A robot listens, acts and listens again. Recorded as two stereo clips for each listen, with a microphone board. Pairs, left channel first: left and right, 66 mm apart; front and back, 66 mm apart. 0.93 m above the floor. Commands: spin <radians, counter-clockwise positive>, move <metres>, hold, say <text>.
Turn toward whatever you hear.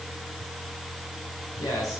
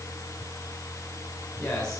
spin 1.40
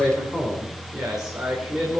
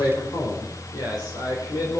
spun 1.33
spin -0.26
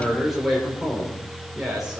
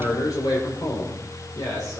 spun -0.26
spin -0.17
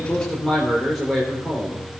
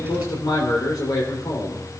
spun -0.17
say Found it: a man speaking, straight ahead.